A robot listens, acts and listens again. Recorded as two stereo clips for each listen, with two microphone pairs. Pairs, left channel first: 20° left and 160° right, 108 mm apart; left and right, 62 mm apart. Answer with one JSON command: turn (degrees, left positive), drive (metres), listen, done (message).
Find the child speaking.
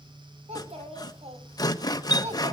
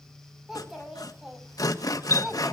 {"turn": -170}
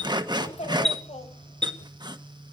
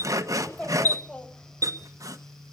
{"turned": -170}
{"turn": 20}
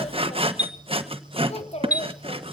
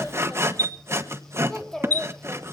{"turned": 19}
{"turn": 10}
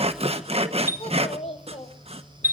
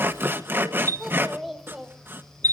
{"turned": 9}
{"done": "Facing the child speaking."}